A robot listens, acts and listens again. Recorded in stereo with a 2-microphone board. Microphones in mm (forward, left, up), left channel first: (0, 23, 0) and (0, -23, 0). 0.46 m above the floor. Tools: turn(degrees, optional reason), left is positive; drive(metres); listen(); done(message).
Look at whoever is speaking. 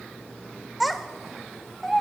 turn(degrees=30)
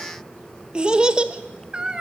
turn(degrees=-30, reason="So it is at 30° right.")
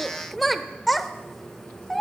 done("Facing the child speaking, under 1 m away.")